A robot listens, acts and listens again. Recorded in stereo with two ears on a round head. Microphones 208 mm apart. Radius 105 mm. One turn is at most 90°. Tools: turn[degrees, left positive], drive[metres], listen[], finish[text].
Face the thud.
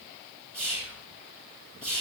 Action: listen[]
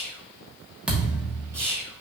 Action: turn[-30]
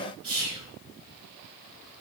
Action: listen[]
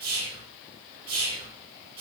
Action: finish[I heard a thud, but can't make it out now. It was about 25° left or 145° right.]